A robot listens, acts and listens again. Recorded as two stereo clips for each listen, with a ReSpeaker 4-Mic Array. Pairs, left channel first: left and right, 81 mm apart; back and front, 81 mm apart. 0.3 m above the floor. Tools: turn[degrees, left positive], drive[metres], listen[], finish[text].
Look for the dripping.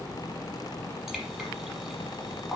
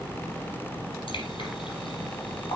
Thought: The dripping: 175° right.
Action: turn[-175]
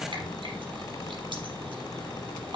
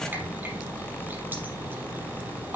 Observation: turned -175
Action: listen[]
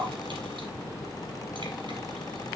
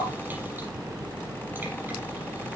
Thought: The dripping is now 70° right.
Action: turn[-70]
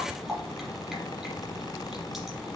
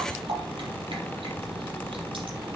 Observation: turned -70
Action: finish[Found it: dripping, straight ahead, over 4 m away.]